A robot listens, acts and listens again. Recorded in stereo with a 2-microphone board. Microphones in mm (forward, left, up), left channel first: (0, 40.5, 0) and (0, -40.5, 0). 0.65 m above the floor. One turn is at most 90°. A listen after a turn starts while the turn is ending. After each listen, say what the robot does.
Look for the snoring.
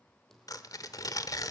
Keep listening.
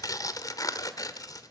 Keep listening.
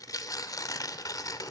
I can't make out snoring, only typing on a keyboard and tearing paper.